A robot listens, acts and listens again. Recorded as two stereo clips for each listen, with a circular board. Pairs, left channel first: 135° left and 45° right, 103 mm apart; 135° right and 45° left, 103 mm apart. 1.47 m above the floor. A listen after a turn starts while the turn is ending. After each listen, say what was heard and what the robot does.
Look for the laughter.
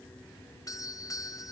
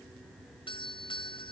Keep listening.
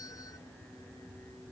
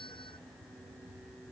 Keep listening.
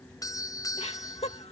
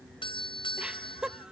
The laughter: 125° left. Turn 125° left.
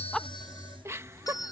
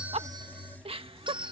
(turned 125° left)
The laughter is now 20° left. Turn 20° left.
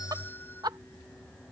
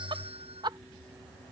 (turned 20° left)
Found it: laughter, straight ahead.